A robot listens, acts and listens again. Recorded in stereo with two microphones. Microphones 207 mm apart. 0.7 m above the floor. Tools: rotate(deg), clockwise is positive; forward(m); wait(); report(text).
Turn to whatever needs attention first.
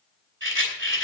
wait()
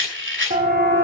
rotate(45)
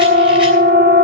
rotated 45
rotate(80)
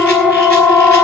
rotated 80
report("Found it: a siren, straight ahead, 2 to 4 m away.")